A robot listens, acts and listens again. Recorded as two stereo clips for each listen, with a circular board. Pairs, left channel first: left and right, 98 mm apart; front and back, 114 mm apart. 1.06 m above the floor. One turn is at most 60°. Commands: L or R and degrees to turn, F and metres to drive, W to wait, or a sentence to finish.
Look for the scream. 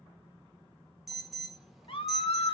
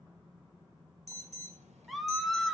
L60
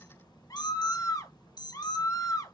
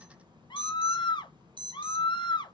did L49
L40
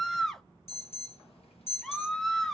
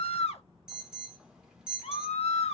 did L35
Facing the scream.